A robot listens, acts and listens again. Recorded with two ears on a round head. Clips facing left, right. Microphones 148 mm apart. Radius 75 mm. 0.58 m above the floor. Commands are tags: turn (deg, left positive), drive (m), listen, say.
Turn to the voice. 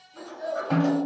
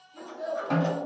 <turn deg="30"/>
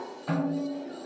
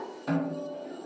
<listen/>
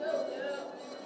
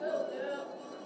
<turn deg="140"/>
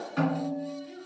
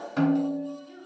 <turn deg="60"/>
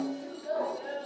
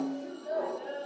<say>Facing the child speaking, under 1 m away.</say>